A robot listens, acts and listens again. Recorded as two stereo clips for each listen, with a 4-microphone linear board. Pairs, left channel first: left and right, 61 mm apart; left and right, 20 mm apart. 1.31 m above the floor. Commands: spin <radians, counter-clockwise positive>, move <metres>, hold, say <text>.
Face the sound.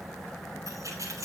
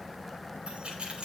spin -1.13
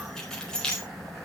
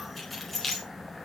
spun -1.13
spin 0.26
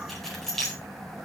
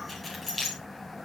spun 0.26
spin 0.17
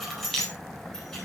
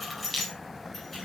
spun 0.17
say Found it: keys jangling, straight ahead.